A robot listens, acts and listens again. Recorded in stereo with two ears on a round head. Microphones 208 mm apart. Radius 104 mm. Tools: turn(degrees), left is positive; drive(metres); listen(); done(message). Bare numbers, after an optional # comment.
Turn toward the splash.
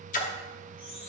# The splash: about 35° left or 145° left.
turn(35)
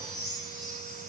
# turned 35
listen()
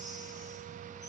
done("I heard a splash, but can't make it out now. It was about straight ahead or 110° left.")